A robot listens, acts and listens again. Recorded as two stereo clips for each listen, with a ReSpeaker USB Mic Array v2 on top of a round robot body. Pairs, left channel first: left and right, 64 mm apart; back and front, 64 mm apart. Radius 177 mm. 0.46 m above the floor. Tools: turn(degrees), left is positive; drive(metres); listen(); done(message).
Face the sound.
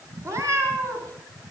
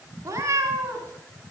turn(degrees=-45)
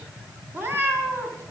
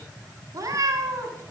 turn(degrees=-30)
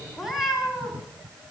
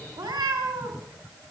done("Facing the cat meowing, 2 to 4 m away.")